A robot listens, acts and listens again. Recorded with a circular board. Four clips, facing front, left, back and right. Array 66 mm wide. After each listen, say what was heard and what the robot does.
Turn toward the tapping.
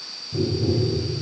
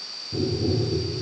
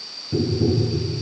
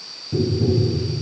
The tapping: 145° right. Turn 145° right.
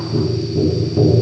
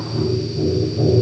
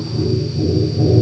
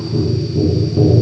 The tapping is now 30° right. Turn 30° right.
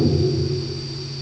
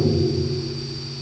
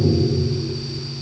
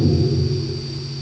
The tapping is now 25° left. Turn 25° left.
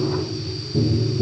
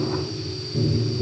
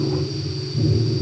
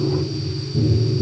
The tapping is now 15° left. Turn 15° left.
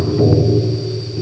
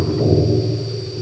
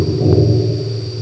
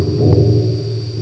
Facing the tapping, 1 to 2 m away.